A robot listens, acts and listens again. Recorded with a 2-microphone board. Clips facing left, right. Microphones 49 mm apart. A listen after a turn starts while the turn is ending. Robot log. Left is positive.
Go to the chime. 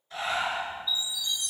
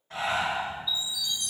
cmd yaw -30
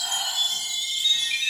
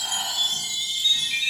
note: So it is at 25° left.
cmd yaw +25
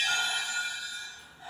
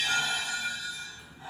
note: The chime is now 10° left.
cmd yaw +10
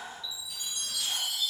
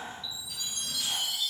cmd fwd 1.0
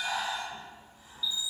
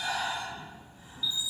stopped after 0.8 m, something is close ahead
end: Arrived at the chime, straight ahead.